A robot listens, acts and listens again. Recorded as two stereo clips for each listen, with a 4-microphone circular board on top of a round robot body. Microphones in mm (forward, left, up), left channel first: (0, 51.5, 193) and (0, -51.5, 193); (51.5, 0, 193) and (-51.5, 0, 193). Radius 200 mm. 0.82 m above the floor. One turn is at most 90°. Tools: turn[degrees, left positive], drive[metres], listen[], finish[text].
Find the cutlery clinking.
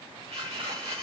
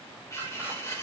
Thought: The cutlery clinking: 60° right.
Action: turn[-60]
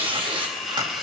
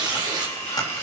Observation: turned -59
Action: finish[Facing the cutlery clinking.]